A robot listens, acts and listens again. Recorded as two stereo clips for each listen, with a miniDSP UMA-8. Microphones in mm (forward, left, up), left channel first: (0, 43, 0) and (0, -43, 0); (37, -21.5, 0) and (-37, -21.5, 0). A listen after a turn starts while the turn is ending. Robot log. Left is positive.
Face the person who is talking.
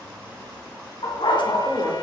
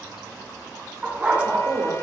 note: The woman speaking: 175° right.
cmd yaw -175
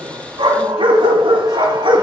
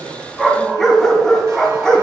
cmd idle
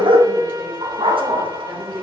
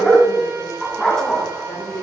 end: Facing the woman speaking.